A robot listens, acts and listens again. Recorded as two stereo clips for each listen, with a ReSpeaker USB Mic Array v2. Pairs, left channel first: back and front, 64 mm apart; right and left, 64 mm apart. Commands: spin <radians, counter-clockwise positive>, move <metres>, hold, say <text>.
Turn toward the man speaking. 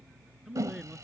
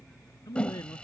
spin -1.48
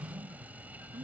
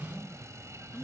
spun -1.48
hold
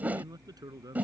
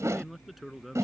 say Found it: a man speaking, straight ahead.